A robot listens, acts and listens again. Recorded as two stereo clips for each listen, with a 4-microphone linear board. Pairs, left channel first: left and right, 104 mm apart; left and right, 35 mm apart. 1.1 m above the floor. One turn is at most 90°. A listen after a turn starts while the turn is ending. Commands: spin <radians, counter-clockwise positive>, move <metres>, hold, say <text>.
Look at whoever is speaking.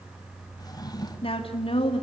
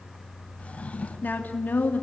spin 1.13
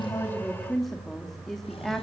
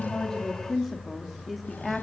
say Found it: a woman speaking, straight ahead, 2 to 4 m away.